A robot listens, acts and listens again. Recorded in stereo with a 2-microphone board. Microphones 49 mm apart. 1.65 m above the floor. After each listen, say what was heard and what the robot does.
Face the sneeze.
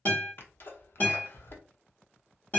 The sneeze: about 50° left or 130° left. Turn 50° left.
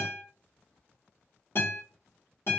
Keep listening.
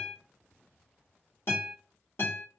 I heard a sneeze, but can't make it out now. It was about straight ahead or 80° left.